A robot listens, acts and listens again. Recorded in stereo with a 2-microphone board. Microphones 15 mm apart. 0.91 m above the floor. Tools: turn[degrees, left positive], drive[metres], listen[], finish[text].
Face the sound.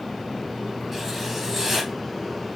Thought: The writing: about 25° right or 155° right.
Action: turn[-25]
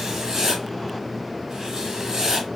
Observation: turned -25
Thought: So it is at 130° right.
Action: turn[-130]
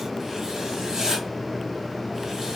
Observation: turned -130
Thought: The writing is now 35° right.
Action: turn[-35]
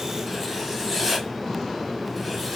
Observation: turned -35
Action: finish[Facing the writing, 1 to 2 m away.]